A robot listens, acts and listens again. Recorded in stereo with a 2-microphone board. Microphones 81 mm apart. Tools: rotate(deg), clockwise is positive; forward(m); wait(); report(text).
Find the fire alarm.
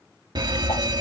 rotate(55)
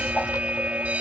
rotate(20)
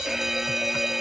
report("Found it: a fire alarm, straight ahead.")